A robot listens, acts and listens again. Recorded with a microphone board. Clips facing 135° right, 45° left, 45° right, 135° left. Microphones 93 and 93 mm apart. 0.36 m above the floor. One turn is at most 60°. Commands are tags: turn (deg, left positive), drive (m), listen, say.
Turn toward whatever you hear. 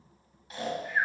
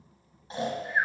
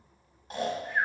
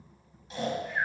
<turn deg="-10"/>
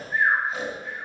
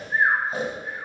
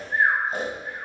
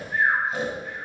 <say>Found it: snoring, straight ahead, 1 to 2 m away.</say>